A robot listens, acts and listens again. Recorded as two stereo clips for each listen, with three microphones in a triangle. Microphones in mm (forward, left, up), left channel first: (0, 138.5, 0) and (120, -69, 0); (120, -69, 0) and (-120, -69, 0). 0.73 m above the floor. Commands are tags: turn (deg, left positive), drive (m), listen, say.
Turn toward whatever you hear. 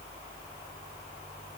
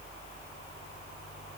<listen/>
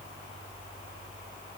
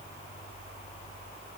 <listen/>
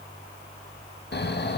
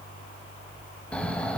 <turn deg="85"/>
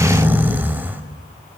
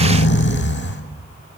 <turn deg="20"/>
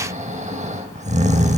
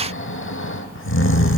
<say>Found it: snoring, straight ahead.</say>